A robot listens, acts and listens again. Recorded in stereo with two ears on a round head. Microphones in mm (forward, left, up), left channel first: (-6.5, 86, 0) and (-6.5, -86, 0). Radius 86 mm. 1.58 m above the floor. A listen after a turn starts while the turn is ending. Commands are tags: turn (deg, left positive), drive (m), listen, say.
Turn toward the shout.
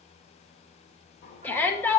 <turn deg="30"/>
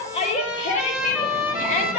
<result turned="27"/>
<turn deg="140"/>
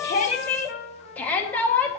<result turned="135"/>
<turn deg="10"/>
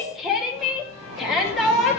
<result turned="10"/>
<say>Facing the shout.</say>